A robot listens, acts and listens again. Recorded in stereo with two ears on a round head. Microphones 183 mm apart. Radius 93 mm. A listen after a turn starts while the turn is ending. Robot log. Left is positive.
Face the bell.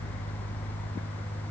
cmd idle
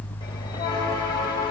note: The bell: about 20° left or 160° left.
cmd yaw +20
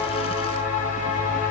note: So it is at 140° left.
cmd yaw +140
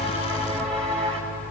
end: Facing the bell, over 4 m away.